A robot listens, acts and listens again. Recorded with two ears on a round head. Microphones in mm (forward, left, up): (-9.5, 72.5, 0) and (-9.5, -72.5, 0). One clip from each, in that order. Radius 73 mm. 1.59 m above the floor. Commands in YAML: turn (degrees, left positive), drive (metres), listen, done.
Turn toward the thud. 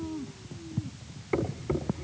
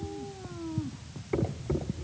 turn: 35
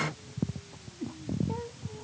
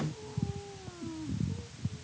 listen: true
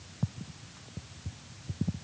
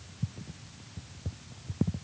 done: "I heard a thud, but can't make it out now. It was about straight ahead or 110° left."